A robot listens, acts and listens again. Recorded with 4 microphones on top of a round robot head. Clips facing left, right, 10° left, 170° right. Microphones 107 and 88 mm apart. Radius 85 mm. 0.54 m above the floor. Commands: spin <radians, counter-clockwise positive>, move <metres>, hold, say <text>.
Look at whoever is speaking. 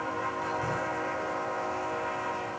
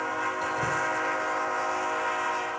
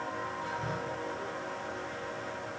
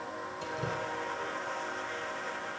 hold
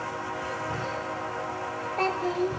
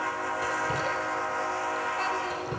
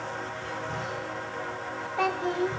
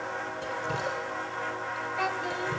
spin 1.05
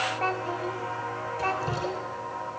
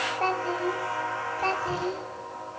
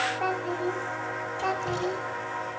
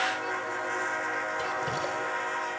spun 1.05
spin -0.52
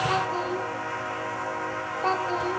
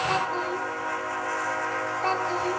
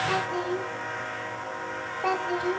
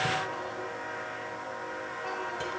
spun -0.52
say Facing the child speaking.